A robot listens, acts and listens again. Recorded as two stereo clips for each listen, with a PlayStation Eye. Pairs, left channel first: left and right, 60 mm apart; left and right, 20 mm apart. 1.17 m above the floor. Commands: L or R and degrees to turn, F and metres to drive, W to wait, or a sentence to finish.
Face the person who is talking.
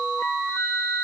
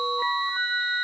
W
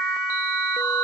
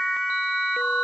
W
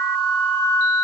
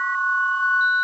I can't make out anyone speaking to turn to.